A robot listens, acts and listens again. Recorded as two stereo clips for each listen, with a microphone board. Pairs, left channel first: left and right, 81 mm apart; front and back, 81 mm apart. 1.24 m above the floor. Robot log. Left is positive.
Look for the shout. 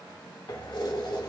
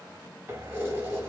cmd idle
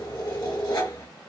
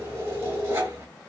cmd idle
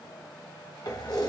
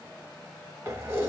end: I can't make out a shout to turn to.